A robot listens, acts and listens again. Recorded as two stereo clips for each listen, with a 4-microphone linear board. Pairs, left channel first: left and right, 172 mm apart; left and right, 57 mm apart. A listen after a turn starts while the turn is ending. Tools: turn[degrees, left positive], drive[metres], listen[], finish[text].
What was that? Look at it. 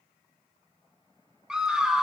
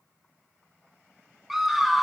Action: turn[-30]
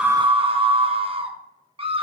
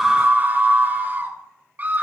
Thought: So it is at 145° right.
Action: turn[-145]
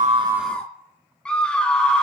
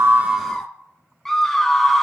Action: finish[Facing the scream.]